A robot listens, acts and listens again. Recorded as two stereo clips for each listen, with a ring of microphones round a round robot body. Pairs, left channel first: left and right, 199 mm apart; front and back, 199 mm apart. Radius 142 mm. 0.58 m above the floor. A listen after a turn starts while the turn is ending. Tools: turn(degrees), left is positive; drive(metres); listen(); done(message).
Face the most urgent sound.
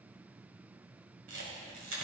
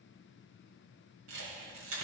listen()
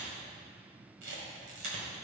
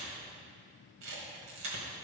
listen()
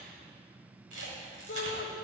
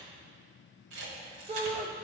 turn(degrees=115)
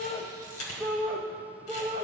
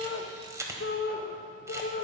done("Found it: a shout, straight ahead, 1 to 2 m away.")